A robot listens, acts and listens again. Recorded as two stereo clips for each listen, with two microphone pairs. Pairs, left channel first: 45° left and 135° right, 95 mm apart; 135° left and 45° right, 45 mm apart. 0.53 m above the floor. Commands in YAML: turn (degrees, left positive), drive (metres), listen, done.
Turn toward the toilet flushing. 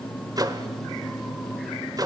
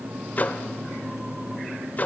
listen: true
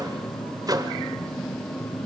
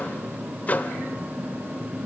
listen: true
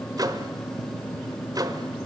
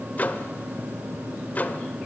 done: "I can't make out a toilet flushing, only a microwave."